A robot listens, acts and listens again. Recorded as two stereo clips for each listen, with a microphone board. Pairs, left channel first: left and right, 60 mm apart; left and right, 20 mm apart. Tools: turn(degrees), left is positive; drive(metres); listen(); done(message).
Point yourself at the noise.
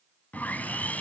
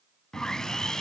turn(degrees=25)
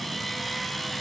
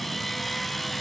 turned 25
done("Facing the sawing, 1 to 2 m away.")